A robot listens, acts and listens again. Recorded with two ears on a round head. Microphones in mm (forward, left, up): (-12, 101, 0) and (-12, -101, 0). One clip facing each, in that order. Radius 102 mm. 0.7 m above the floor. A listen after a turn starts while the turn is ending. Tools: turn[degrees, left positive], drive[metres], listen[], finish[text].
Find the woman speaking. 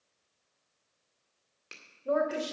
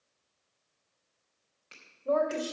Action: turn[30]
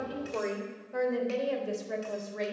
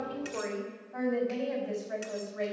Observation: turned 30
Thought: So it is at 125° left.
Action: turn[125]
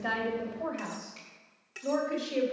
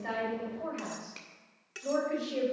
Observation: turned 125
Thought: The woman speaking is now 15° left.
Action: turn[15]
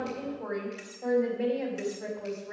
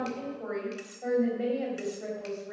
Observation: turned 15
Action: finish[Facing the woman speaking.]